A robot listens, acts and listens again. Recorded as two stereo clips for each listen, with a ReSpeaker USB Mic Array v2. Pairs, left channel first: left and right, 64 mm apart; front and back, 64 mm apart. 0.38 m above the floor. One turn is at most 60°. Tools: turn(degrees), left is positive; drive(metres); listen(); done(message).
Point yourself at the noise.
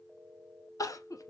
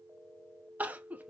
turn(degrees=60)
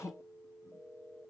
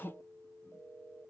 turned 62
turn(degrees=55)
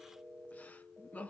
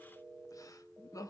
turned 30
turn(degrees=25)
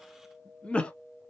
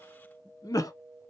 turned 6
turn(degrees=15)
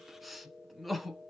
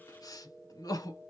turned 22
done("Facing the crying, under 1 m away.")